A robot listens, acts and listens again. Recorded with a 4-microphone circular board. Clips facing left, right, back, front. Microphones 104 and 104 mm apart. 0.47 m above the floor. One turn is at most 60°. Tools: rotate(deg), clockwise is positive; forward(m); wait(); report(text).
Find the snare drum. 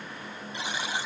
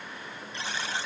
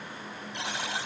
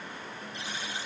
wait()
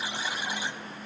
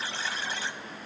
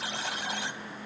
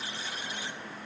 wait()
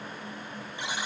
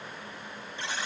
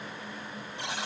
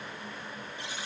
report("I can't make out a snare drum to turn to.")